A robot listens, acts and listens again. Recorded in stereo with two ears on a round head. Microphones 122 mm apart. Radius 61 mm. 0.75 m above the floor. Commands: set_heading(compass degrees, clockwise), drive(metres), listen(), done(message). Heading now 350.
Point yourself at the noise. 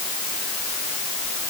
listen()
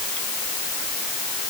listen()
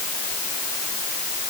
done("I can't make out anything.")